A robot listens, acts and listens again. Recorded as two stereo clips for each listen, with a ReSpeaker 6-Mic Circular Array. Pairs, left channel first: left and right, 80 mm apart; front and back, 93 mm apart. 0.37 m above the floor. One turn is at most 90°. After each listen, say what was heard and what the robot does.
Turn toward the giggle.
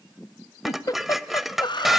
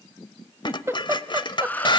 The giggle: 120° left. Turn 90° left.
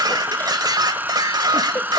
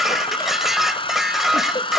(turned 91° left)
Nothing new. It was at 30° left. Turn 30° left.
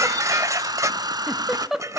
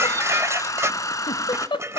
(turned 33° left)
Found it: a giggle, straight ahead.